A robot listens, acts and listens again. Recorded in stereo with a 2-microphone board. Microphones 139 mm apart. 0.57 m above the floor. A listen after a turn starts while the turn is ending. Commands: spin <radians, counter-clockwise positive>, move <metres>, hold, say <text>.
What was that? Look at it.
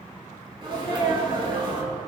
spin -0.61
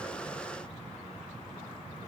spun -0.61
hold
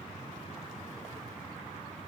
say I heard a sneeze, but can't make it out now. It was about straight ahead or 110° right.